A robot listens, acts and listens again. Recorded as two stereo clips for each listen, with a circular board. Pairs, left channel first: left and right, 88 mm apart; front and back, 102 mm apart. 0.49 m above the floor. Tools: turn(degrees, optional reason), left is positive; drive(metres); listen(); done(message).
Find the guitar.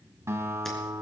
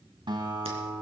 turn(degrees=-145, reason="The guitar: 145° right.")
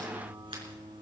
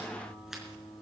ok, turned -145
turn(degrees=-55, reason="The guitar is now 55° right.")
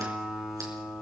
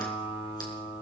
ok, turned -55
done("Found it: a guitar, straight ahead, 2 to 4 m away.")